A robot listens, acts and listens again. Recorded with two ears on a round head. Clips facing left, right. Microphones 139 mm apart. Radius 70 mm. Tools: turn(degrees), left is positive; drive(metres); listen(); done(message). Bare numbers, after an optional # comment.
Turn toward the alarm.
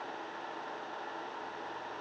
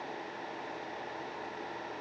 listen()
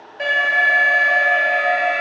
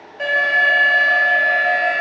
turn(30)
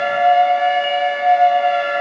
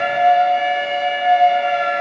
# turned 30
# So it is at 145° left.
turn(145)
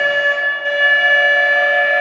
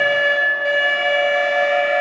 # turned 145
# The alarm is now 15° right.
turn(-15)
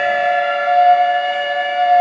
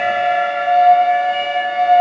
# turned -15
done("Found it: an alarm, straight ahead, 2 to 4 m away.")